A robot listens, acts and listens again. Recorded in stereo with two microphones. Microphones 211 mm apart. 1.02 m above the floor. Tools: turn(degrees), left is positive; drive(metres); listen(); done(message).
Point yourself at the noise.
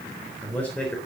turn(degrees=30)
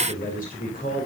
turn(degrees=140)
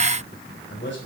turn(degrees=60)
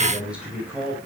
done("Found it: a man speaking, straight ahead, over 4 m away.")